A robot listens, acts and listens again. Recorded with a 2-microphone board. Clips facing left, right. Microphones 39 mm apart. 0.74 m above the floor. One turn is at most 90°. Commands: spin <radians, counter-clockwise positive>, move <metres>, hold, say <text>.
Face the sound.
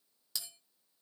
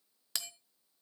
spin -1.05
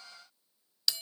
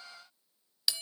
spin -0.17
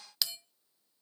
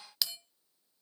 say Facing the bell.